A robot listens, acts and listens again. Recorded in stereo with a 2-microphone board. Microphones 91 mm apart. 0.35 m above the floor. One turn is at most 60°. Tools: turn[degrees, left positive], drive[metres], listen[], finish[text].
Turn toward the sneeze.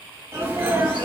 Thought: The sneeze: about 30° right or 150° right.
Action: turn[-30]
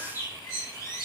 Action: listen[]
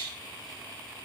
Action: finish[I heard a sneeze, but can't make it out now. It was about straight ahead or 120° right.]